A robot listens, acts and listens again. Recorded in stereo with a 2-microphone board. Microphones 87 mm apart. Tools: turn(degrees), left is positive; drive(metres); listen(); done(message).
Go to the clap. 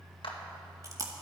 turn(degrees=90)
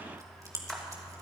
listen()
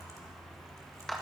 drive(metres=1.0)
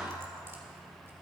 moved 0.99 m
listen()
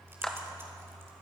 turn(degrees=10)
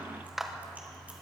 drive(metres=1.0)
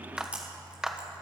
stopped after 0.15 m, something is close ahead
done("I am next to the clap.")